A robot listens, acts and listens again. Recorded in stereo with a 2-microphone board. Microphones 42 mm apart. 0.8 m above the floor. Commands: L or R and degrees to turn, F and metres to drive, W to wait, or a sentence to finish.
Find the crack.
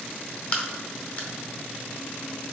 L35
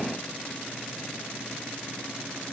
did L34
W
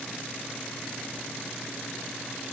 I heard a crack, but can't make it out now. It was about straight ahead or 110° left.